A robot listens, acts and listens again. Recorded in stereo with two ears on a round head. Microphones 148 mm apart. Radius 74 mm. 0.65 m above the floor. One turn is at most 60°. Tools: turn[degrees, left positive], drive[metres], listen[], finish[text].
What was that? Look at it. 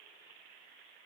Action: listen[]
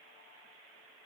Action: listen[]
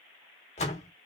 Thought: The door slam: about 40° left or 140° left.
Action: turn[40]
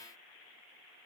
Action: listen[]
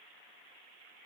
Action: finish[I heard a door slam, but can't make it out now. It was about straight ahead or 100° left.]